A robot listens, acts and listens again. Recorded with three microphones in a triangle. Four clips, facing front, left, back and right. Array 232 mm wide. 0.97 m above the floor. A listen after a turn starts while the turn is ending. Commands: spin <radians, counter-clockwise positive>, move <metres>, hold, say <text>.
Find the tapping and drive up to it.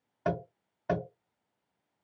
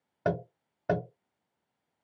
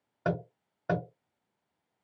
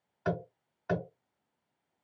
spin 1.83
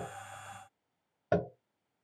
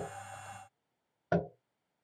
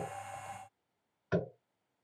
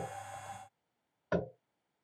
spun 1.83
spin 0.61
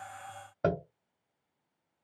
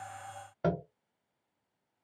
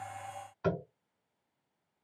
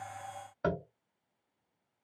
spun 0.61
spin 0.26
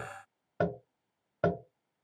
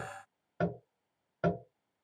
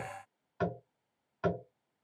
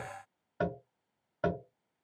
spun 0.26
move 1.0
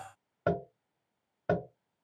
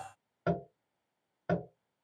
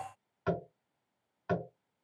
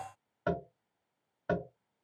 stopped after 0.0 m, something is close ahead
say Something is in my way. I am facing the tapping but have not reached it.